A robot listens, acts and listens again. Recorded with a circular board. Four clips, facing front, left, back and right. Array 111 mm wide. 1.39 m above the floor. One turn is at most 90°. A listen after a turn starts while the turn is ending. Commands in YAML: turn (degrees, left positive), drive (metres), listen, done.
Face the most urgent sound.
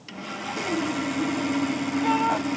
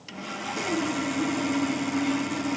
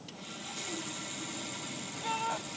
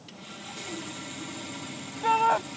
turn: -60
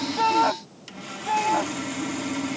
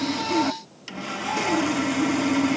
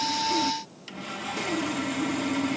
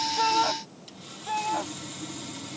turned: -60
done: "Facing the shout."